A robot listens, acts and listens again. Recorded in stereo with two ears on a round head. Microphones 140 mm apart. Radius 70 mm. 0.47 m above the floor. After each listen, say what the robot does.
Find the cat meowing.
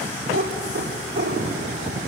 Turn 40° right.
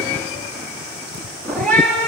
Turn 10° left.
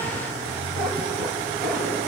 Keep listening.
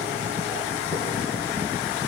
Keep listening.
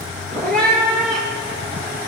Turn 10° left.
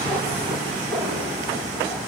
Found it: a cat meowing, straight ahead.